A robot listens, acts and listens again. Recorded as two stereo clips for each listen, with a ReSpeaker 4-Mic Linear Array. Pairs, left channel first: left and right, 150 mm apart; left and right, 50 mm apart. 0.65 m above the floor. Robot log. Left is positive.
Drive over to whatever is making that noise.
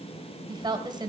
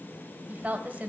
note: The woman speaking: about 30° right or 150° right.
cmd yaw -30
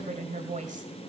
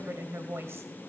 note: So it is at 120° right.
cmd yaw -120
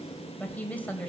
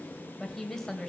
note: The woman speaking is now 10° left.
cmd yaw +10
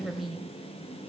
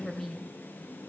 cmd fwd 1.0
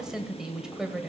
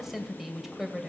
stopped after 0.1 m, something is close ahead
end: Blocked. The woman speaking is further on, straight ahead.